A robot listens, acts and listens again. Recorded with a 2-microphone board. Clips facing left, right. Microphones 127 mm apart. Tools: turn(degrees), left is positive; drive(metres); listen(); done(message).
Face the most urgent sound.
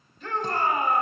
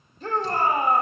turn(degrees=-40)
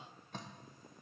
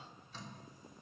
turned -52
listen()
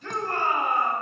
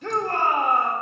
turn(degrees=-85)
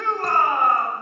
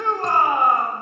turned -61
turn(degrees=-20)
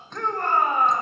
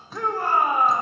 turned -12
turn(degrees=-10)
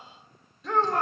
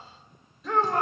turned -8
done("Facing the shout, 1 to 2 m away.")